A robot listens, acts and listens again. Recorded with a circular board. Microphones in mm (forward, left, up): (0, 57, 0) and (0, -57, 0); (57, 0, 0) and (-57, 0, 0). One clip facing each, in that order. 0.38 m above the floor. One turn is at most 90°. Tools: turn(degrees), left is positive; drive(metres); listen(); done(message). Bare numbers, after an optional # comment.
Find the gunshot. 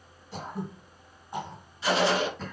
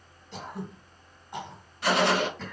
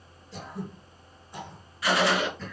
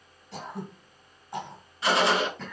# The gunshot: 115° right.
turn(-90)
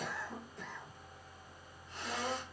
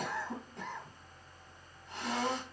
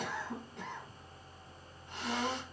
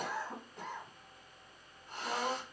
# Nothing new. It was at 25° right.
turn(-25)
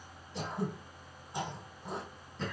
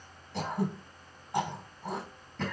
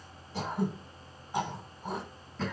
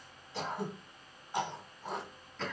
done("I heard a gunshot from this way, but can't make it out now.")